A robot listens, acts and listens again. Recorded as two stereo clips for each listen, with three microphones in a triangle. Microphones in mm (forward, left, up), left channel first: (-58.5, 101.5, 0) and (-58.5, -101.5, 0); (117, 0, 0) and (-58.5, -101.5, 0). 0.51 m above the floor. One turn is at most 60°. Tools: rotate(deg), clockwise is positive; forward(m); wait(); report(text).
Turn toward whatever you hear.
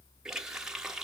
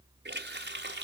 rotate(60)
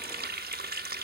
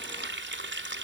rotate(60)
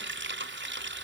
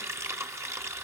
rotate(60)
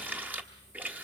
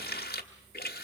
rotate(10)
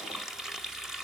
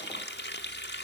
report("Facing the running tap, 1 to 2 m away.")